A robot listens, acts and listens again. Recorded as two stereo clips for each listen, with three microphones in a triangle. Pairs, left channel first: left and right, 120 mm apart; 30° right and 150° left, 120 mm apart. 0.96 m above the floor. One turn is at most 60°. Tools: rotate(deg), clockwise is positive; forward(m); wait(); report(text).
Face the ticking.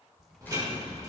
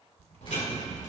rotate(30)
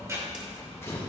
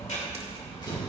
rotate(25)
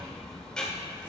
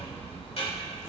report("Facing the ticking, 2 to 4 m away.")